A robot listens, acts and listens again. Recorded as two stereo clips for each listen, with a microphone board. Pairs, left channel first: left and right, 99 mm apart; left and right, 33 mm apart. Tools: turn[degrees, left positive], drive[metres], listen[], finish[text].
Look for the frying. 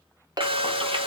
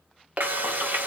Thought: The frying: about 65° right or 115° right.
Action: turn[-65]
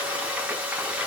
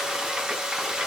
Thought: So it is at 15° right.
Action: turn[-15]
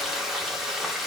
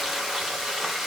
Action: finish[Found it: frying, straight ahead.]